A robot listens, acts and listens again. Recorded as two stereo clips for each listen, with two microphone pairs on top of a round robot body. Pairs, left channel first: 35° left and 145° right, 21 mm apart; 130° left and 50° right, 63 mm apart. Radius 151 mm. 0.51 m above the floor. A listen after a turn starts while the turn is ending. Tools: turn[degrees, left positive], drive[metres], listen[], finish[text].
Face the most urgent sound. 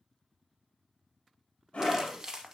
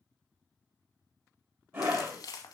Action: finish[Facing the scream.]